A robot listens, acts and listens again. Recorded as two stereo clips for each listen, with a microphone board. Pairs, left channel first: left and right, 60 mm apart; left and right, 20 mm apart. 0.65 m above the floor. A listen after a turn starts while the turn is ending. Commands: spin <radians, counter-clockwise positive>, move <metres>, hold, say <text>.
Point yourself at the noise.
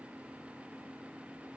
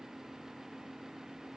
hold
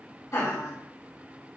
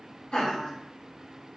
spin 1.05
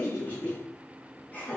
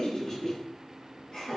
spin 0.61
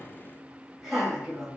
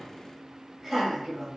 say Found it: laughter, straight ahead, 1 to 2 m away.